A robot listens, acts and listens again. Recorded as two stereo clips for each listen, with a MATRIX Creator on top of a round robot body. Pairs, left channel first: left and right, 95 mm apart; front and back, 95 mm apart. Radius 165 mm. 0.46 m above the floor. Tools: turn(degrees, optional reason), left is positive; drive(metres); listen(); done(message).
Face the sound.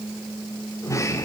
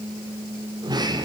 turn(degrees=145, reason="The sliding door: 145° left.")
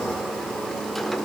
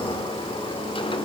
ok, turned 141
done("Found it: a sliding door, straight ahead, 2 to 4 m away.")